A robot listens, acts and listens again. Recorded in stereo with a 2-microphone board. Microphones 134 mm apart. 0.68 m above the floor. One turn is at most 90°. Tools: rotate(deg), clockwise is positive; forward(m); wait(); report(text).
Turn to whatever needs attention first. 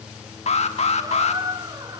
rotate(-55)
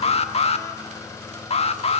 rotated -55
rotate(-60)
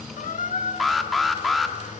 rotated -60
report("Facing the alarm.")